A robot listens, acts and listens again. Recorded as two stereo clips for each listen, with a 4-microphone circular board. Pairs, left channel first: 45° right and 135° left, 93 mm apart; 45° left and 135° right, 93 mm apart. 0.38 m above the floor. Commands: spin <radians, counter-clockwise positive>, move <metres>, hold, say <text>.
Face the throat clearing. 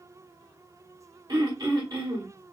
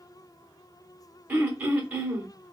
spin 2.71
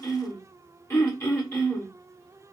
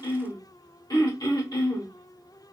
spin 0.17
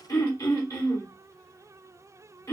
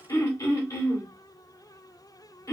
say Facing the throat clearing, 1 to 2 m away.